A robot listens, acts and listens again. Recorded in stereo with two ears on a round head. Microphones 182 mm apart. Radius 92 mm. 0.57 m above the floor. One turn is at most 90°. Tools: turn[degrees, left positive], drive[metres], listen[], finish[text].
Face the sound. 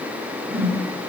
Action: turn[-30]
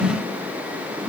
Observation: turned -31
Thought: So it is at 15° left.
Action: turn[15]
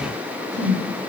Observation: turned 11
Action: finish[Facing the whoosh.]